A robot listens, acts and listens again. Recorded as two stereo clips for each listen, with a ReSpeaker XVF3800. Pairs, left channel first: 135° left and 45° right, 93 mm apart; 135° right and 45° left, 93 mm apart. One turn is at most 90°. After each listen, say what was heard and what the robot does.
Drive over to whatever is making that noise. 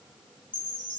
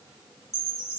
The chime: 165° left. Turn 90° left.
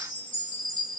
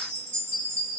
The chime is now 110° left. Turn 90° left.
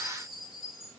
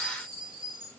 The chime is now 45° left. Turn 45° left.
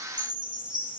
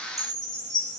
Drive 1.0 m forward.
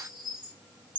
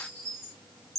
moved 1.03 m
The chime is now 10° right. Turn 10° right.
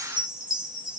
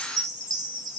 Drive 1.0 m forward.
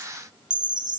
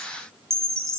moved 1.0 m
The chime is now 10° right. Turn 10° right.
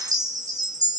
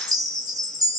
Drive 1.0 m forward.
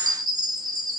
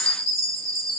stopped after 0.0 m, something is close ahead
Arrived at the chime, straight ahead.